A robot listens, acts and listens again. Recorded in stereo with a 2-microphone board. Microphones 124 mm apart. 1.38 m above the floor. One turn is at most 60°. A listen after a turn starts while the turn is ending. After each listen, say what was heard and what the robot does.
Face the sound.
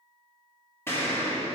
The explosion: about 20° left or 160° left. Turn 20° left.
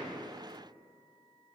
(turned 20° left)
Keep listening.
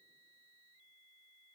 I heard an explosion, but can't make it out now. It was about straight ahead or 140° left.